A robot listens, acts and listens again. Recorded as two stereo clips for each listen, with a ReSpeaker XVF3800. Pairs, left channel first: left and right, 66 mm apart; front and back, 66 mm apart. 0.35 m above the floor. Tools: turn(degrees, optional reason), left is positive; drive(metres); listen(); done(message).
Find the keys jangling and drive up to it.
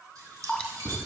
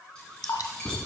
turn(degrees=-80, reason="The keys jangling: 80° right.")
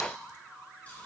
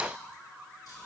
listen()
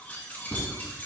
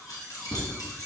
turn(degrees=25, reason="The keys jangling is now 25° left.")
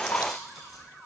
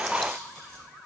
listen()
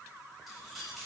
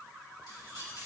drive(metres=1.0)
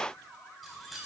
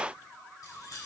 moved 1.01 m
drive(metres=1.0)
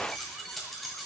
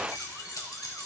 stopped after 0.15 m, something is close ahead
done("I am next to the keys jangling.")